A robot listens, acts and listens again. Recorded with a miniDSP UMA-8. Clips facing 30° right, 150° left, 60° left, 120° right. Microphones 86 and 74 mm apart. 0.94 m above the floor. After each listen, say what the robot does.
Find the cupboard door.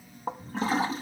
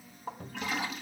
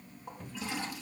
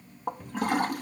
Turn 150° left.
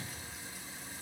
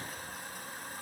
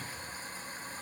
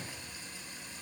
Turn 10° right.
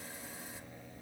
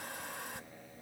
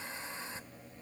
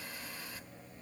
Keep listening.
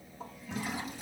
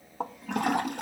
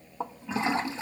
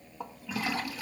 Keep listening.
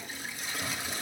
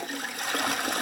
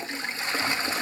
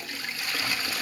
Facing where the cupboard door came from. I can't hear it now.